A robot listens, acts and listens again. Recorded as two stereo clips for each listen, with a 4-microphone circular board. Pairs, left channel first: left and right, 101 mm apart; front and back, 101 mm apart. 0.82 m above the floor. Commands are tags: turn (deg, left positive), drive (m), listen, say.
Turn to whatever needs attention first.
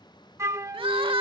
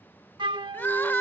<turn deg="-70"/>
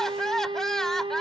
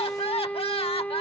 <say>Facing the crying.</say>